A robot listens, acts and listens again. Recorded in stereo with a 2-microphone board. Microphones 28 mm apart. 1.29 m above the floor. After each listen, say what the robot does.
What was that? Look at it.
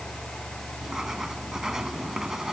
Turn 20° right.
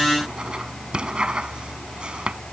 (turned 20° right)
Turn 145° right.
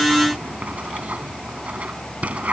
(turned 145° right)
Turn 55° right.
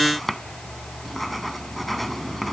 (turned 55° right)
Found it: writing, straight ahead.